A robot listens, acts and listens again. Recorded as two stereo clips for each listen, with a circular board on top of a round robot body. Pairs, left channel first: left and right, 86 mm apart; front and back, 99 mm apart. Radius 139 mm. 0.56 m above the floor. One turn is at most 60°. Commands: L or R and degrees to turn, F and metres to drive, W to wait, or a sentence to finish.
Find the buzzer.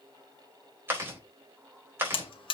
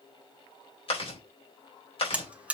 L60
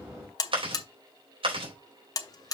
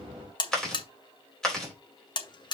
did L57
L45
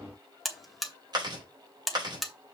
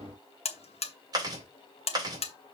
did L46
Facing the buzzer.